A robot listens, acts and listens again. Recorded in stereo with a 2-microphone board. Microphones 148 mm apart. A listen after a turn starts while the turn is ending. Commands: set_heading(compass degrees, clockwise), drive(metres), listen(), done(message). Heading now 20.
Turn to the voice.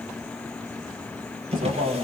set_heading(110)
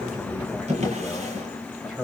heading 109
done("Facing the man speaking, over 4 m away.")